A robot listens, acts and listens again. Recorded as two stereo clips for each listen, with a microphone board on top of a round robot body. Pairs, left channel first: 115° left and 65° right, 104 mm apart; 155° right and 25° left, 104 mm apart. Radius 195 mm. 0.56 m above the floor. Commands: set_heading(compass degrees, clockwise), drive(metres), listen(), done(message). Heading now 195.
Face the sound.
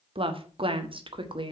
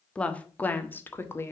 set_heading(290)
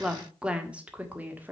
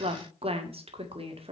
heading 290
done("Found it: a woman speaking, straight ahead, 2 to 4 m away.")